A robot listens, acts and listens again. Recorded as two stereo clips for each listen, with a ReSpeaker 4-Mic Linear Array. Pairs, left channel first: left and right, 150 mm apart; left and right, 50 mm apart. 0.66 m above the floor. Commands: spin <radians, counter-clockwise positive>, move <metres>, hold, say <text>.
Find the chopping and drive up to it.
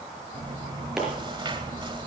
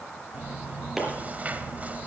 spin -0.52
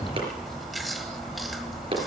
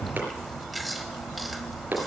spin -2.53
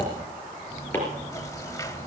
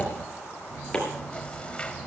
spin 0.26
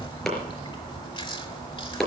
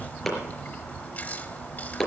move 1.0
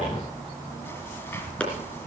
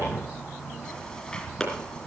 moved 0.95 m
spin 0.17
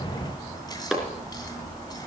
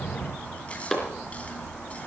move 1.0
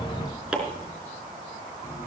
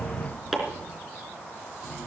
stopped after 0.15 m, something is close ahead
say Blocked. The chopping is further on, straight ahead.